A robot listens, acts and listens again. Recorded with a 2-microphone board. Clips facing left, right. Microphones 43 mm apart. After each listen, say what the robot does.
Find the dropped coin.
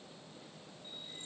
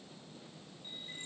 Keep listening.
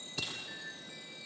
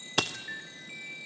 Turn 70° right.
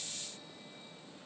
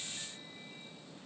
Keep listening.
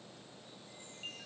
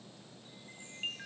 I heard a dropped coin, but can't make it out now. It was about straight ahead or 40° right.